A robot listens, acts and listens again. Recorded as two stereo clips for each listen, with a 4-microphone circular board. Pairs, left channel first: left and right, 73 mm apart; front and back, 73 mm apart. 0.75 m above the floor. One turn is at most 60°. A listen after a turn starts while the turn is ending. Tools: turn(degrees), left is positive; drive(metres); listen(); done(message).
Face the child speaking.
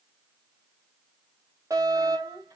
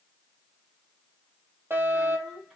turn(degrees=-60)
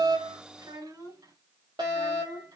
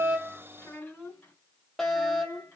turn(degrees=-60)
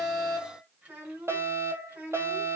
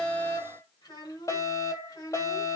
turn(degrees=-25)
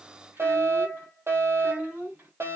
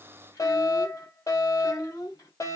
turn(degrees=-25)
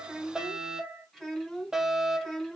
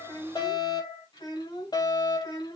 done("Facing the child speaking.")